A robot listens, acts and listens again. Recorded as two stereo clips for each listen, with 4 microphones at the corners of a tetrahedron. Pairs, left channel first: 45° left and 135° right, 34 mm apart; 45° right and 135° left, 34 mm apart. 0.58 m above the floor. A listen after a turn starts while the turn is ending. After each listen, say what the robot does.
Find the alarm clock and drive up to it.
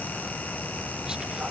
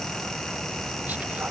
Keep listening.
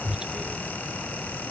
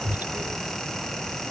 Keep listening.
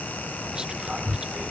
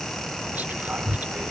I can't make out an alarm clock, only whispering.